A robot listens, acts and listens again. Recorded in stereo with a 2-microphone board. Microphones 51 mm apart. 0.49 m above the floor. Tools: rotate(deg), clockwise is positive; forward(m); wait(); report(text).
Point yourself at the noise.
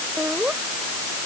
rotate(30)
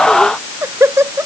rotate(120)
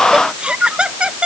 rotate(20)
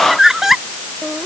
rotate(10)
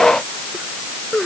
report("Facing the laughter.")